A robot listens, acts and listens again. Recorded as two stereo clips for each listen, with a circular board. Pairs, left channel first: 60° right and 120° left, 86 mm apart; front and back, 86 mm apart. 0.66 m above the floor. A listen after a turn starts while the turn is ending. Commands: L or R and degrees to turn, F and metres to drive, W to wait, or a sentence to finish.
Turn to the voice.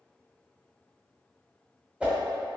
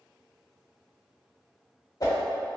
W
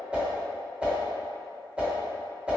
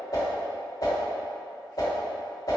W
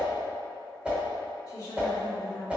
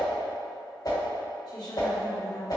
R25
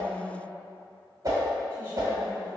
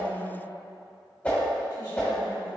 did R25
Facing the woman speaking.